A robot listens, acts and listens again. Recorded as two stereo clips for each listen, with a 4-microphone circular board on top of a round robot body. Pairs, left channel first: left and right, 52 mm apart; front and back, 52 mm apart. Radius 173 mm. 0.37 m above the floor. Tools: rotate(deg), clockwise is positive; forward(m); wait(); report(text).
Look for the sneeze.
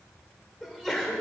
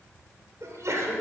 rotate(175)
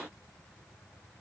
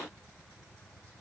report("Facing where the sneeze came from. I can't hear it now.")